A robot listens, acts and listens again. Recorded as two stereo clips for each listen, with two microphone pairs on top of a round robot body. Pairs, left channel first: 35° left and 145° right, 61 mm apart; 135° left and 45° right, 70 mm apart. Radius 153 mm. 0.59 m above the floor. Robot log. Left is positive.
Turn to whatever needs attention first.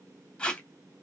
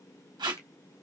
cmd idle
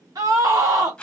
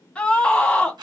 note: The scream: 150° right.
cmd yaw -150
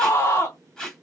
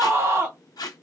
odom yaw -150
end: Facing the scream.